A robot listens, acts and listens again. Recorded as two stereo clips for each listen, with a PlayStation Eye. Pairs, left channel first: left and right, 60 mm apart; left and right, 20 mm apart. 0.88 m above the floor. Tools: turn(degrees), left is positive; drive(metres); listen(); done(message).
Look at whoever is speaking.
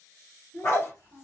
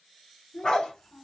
turn(degrees=90)
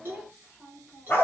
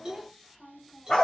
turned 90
done("Facing the child speaking.")